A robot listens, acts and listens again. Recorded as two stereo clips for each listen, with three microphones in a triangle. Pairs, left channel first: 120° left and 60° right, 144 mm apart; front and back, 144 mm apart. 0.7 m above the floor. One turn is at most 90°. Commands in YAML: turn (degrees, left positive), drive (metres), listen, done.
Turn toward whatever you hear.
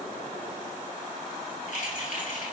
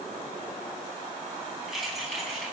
turn: 90
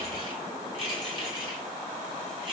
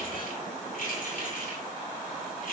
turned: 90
turn: -10
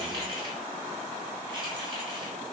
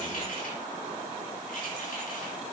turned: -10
listen: true
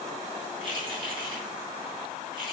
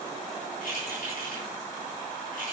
done: "Found it: keys jangling, straight ahead."